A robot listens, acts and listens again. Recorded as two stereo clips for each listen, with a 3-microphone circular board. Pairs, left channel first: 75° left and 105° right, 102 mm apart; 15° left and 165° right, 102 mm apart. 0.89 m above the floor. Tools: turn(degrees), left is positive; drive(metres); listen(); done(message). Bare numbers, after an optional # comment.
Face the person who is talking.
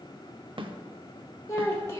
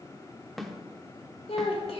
# The child speaking: 10° left.
turn(10)
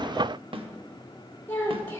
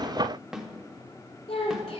done("Facing the child speaking.")